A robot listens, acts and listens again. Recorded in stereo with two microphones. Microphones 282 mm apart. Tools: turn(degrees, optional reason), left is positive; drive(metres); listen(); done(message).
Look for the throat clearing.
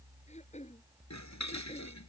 turn(degrees=25, reason="The throat clearing: about 25° left or 155° left.")
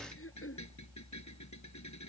turn(degrees=130, reason="So it is at 130° left.")
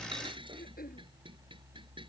turn(degrees=30, reason="The throat clearing is now 30° left.")
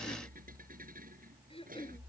turn(degrees=20, reason="The throat clearing is now 20° left.")
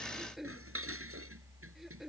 done("Found it: throat clearing, straight ahead.")